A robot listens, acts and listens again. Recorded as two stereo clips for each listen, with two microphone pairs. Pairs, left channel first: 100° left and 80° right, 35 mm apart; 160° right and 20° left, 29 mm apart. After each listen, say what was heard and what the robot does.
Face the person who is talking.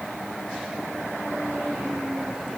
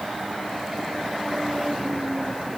Keep listening.
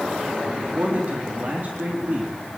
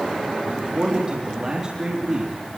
The man speaking: 35° right. Turn 35° right.
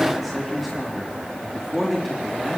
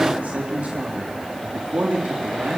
The man speaking is now 10° left. Turn 10° left.
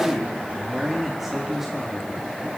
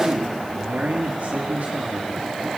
Facing the man speaking, over 4 m away.